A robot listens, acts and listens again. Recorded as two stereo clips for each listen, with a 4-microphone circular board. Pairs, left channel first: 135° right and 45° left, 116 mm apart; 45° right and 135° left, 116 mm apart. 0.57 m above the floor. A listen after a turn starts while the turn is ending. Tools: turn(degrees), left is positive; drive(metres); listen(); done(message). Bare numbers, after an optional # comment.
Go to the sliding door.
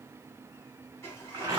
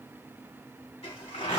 # The sliding door: 65° right.
turn(-65)
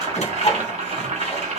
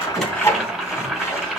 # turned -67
listen()
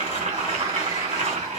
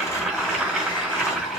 listen()
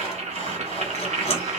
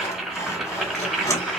done("Facing where the sliding door came from. I can't hear it now. I did not reach it.")